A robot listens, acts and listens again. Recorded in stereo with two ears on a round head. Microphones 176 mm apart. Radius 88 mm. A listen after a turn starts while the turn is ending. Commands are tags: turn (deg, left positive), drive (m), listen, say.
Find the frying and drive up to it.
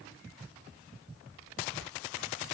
<listen/>
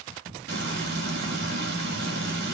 <turn deg="-55"/>
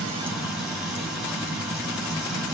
<drive m="1.0"/>
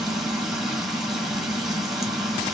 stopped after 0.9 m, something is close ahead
<say>I am next to the frying.</say>